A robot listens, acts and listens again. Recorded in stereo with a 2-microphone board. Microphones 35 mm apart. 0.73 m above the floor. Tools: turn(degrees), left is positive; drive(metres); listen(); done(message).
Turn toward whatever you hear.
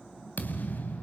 turn(degrees=60)
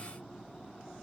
listen()
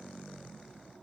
done("I heard a thud, but can't make it out now. It was about straight ahead or 60° left.")